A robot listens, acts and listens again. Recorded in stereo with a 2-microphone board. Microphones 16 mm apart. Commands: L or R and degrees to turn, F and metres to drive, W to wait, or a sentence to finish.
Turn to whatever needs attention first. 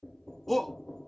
L30
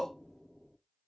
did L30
L150
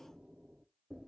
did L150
W
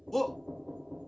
L15
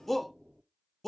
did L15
L10
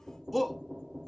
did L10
Facing the shout, under 1 m away.